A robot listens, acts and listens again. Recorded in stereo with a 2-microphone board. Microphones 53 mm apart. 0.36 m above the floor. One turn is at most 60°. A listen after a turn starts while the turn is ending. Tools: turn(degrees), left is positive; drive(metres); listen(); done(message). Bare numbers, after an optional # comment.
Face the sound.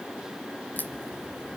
# The crack: about 35° left or 145° left.
turn(35)
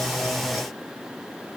listen()
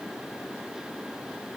done("I heard a crack, but can't make it out now. It was about straight ahead or 110° left.")